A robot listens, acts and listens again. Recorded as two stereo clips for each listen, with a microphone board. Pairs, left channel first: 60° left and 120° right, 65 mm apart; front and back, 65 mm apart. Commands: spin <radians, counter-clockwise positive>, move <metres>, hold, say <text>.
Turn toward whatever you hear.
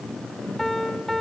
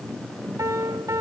spin 2.53
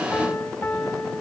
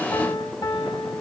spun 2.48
say Facing the piano, 2 to 4 m away.